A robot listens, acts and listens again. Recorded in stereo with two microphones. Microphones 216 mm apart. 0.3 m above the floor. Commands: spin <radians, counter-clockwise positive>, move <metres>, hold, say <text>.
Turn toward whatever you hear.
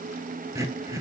spin -0.52
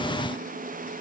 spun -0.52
hold
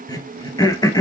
spin 0.26
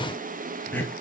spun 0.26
spin 0.17
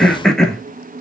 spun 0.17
say Found it: throat clearing, straight ahead, 1 to 2 m away.